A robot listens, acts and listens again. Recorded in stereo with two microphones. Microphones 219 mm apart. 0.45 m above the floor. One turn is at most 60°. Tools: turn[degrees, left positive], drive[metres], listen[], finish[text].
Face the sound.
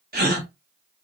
Thought: The gasp: about 45° right or 135° right.
Action: turn[-45]
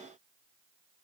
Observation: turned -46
Action: listen[]
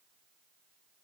Action: finish[I heard a gasp, but can't make it out now. It was about straight ahead or 90° right.]